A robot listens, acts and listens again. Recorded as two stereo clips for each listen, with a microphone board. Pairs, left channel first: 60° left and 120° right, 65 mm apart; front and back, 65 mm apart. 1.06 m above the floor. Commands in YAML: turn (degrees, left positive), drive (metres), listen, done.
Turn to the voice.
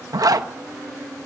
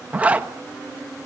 listen: true
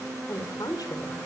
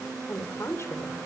turn: 45
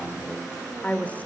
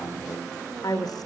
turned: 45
done: "Facing the woman speaking."